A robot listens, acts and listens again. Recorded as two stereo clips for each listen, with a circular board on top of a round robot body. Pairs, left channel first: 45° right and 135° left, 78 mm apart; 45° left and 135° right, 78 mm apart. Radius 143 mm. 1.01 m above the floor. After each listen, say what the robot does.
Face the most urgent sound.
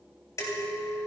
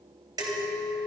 Keep listening.
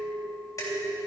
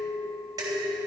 Keep listening.
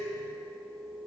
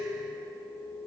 I can't make out anything urgent, only dishes clattering and a clink.